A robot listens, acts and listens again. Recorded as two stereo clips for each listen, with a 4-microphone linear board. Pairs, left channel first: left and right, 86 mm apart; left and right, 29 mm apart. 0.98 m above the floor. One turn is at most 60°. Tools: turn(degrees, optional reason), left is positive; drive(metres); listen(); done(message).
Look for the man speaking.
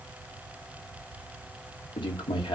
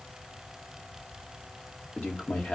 turn(degrees=60, reason="The man speaking: about 70° left or 110° left.")
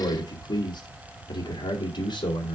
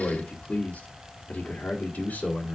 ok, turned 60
turn(degrees=60, reason="So it is at 65° left.")
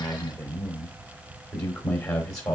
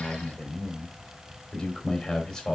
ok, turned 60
done("Facing the man speaking, 2 to 4 m away.")